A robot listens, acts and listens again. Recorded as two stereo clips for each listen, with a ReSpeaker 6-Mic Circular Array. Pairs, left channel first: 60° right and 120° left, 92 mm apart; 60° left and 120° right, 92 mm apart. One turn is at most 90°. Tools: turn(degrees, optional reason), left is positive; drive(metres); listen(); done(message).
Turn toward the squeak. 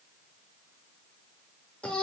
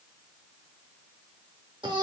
listen()
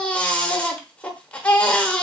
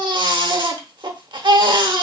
listen()
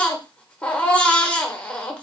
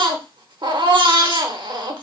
done("I can't make out a squeak, only a baby crying.")